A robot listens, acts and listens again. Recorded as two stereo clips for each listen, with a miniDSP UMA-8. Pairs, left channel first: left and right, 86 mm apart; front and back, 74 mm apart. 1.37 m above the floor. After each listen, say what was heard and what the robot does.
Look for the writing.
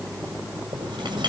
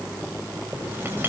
The writing: 115° right. Turn 115° right.
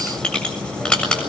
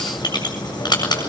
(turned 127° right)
The writing is now 10° left. Turn 10° left.
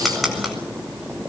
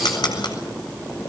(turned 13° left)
Facing the writing.